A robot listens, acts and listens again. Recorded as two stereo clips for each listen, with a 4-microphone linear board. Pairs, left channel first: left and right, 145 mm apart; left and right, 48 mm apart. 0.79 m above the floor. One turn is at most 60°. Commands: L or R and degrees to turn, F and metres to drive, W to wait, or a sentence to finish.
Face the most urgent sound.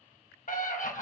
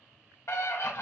L60
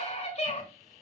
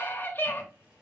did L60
L50
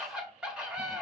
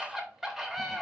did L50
Facing the scream, 1 to 2 m away.